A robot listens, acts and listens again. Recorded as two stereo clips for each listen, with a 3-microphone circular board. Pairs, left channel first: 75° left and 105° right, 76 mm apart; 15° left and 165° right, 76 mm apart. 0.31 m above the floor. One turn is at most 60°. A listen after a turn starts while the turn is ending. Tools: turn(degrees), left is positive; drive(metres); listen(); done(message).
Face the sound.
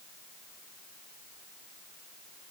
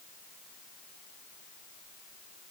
listen()
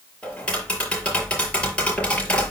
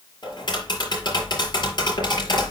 done("Facing the tapping, over 4 m away.")